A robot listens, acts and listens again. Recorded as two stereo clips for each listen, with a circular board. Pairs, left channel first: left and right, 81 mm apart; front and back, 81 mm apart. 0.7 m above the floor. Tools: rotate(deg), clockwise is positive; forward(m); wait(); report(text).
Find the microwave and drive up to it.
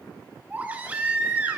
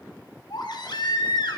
wait()
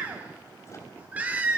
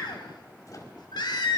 wait()
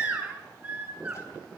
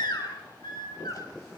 report("I can't make out a microwave to turn to.")